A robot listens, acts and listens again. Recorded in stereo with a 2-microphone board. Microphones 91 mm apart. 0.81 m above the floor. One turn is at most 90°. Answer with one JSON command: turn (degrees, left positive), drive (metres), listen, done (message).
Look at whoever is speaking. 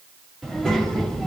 {"turn": 30}
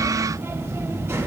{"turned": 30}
{"turn": -25}
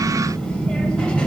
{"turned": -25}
{"turn": 10}
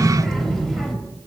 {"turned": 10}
{"done": "Found it: a child speaking, straight ahead."}